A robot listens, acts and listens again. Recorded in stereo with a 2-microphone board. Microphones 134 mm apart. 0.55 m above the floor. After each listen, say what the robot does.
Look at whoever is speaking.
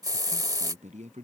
Turn 60° right.
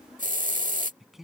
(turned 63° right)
Found it: a man speaking, straight ahead.